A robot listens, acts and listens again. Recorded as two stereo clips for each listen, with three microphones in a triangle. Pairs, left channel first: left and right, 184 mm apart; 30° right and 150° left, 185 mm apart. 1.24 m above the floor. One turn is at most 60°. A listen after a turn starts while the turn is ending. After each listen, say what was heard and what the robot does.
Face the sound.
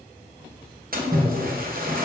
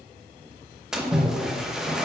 The splash: 125° right. Turn 60° right.
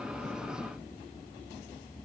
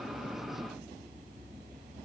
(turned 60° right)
Nothing new. It was at 65° right. Turn 60° right.
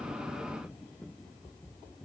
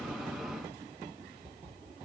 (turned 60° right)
Facing where the splash came from. I can't hear it now.